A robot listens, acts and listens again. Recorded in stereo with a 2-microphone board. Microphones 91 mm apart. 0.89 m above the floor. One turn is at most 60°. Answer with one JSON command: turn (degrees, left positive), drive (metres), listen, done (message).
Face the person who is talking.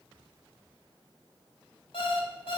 {"listen": true}
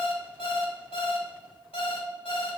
{"listen": true}
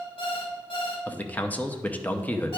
{"turn": 15}
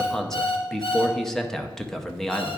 {"done": "Facing the man speaking, under 1 m away."}